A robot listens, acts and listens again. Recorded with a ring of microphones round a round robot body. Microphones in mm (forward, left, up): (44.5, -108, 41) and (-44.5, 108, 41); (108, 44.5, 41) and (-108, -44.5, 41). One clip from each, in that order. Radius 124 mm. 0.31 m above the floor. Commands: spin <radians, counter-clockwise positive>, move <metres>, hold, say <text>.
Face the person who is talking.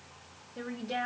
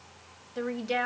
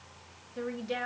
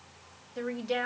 spin 2.36
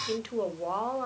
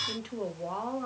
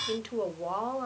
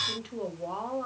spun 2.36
spin -0.61
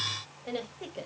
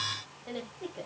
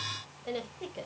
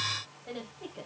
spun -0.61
spin -0.35
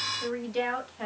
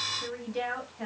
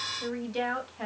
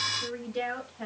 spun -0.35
spin -0.17
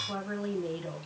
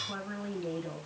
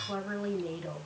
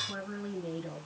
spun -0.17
say Facing the woman speaking, 2 to 4 m away.